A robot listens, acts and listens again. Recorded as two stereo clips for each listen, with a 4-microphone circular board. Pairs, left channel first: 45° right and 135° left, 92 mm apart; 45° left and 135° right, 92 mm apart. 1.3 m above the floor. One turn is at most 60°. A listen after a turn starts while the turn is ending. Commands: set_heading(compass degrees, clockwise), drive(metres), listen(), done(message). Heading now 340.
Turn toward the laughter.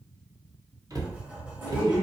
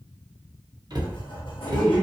set_heading(5)
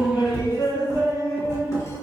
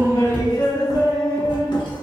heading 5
set_heading(350)
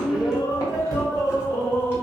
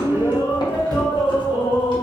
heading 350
set_heading(330)
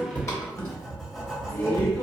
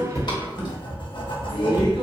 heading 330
set_heading(315)
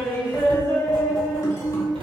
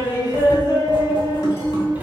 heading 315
done("Found it: laughter, straight ahead, 1 to 2 m away.")